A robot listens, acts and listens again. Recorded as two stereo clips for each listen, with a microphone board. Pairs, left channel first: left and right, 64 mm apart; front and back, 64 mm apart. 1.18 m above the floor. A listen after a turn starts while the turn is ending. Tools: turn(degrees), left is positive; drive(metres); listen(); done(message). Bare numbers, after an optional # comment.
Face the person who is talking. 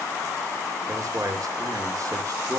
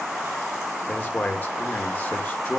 # The man speaking: 60° right.
turn(-60)
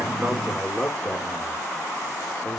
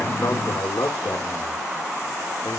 # The man speaking is now 10° left.
turn(10)
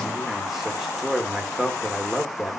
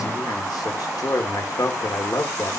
done("Found it: a man speaking, straight ahead.")